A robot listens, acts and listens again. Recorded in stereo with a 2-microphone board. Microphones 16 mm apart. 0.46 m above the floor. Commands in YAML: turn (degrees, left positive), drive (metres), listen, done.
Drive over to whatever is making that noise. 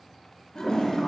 turn: 50
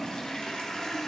turn: 80
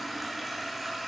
drive: 1.0
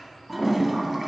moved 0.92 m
turn: -15
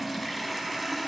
drive: 1.0
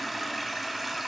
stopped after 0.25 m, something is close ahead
done: "I am next to the toilet flushing."